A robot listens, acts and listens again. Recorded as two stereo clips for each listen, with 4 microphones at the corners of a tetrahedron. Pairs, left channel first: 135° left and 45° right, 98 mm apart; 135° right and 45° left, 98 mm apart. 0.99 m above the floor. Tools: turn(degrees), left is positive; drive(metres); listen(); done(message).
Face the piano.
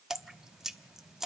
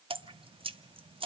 listen()
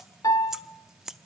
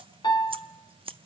turn(degrees=-175)
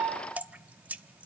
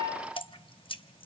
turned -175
turn(degrees=30)
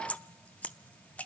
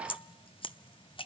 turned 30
listen()
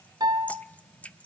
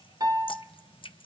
done("Found it: a piano, straight ahead.")